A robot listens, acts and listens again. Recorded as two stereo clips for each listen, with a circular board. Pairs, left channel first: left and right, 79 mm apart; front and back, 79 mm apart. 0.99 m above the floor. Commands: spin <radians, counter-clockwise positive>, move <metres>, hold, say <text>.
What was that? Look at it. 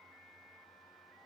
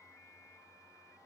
hold
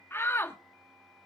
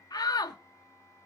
spin 0.52
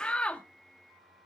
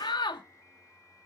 spin 0.26
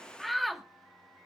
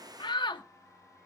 say Found it: a shout, straight ahead.